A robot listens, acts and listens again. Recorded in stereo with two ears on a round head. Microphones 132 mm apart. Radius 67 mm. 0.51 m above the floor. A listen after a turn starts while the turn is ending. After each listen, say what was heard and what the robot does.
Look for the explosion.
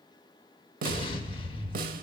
The explosion: about 30° left or 150° left. Turn 30° left.
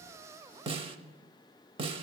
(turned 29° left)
Keep listening.
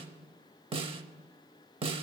I heard an explosion, but can't make it out now. It was about 5° left or 120° left.